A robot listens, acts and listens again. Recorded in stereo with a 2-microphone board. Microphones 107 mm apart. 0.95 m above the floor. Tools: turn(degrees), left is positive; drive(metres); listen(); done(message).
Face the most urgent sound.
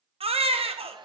turn(degrees=-65)
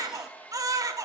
turn(degrees=-35)
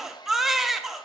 done("Found it: a baby crying, straight ahead.")